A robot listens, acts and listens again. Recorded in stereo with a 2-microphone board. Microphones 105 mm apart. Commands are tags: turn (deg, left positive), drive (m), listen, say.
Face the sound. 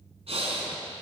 <turn deg="-75"/>
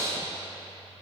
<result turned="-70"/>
<turn deg="-30"/>
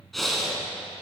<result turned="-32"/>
<say>Facing the breathing.</say>